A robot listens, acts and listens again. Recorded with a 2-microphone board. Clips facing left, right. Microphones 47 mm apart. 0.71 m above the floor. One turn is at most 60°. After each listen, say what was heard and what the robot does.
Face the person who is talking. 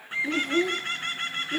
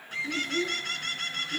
The child speaking: about 65° left or 115° left. Turn 60° left.
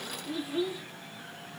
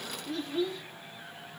So it is at 10° left. Turn 10° left.
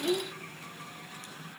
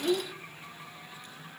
Found it: a child speaking, straight ahead.